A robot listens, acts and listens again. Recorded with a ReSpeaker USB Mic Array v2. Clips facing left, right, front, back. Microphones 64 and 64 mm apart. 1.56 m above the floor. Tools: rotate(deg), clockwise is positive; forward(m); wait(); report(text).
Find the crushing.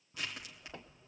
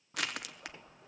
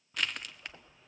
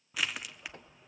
rotate(95)
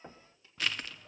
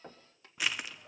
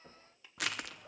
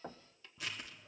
rotate(15)
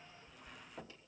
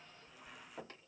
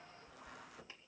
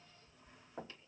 report("Facing the crushing, under 1 m away.")